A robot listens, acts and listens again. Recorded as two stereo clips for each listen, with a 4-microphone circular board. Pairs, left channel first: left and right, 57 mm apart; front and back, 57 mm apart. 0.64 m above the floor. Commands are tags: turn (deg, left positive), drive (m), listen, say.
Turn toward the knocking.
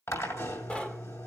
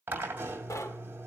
<turn deg="20"/>
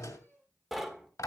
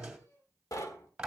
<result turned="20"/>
<say>Facing the knocking, 1 to 2 m away.</say>